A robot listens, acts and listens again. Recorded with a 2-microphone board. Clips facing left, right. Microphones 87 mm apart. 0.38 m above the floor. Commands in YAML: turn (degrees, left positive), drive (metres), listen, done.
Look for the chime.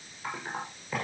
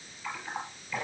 listen: true
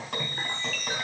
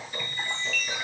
turn: 45
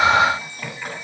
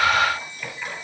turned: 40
turn: 90
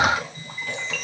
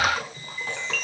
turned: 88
done: "Found it: a chime, straight ahead, 2 to 4 m away."